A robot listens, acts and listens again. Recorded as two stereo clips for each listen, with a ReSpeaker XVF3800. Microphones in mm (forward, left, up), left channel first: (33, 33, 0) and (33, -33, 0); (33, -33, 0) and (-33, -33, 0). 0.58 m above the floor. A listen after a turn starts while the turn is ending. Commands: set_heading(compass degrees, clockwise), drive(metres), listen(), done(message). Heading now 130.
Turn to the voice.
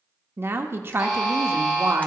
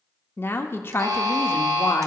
set_heading(175)
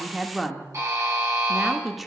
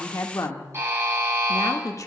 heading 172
done("Found it: a woman speaking, straight ahead, 1 to 2 m away.")